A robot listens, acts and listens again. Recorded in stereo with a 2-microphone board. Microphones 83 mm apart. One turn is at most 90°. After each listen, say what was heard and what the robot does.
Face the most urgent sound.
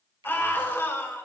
The scream: about 25° left or 155° left. Turn 25° left.
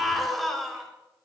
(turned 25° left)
Found it: a scream, straight ahead.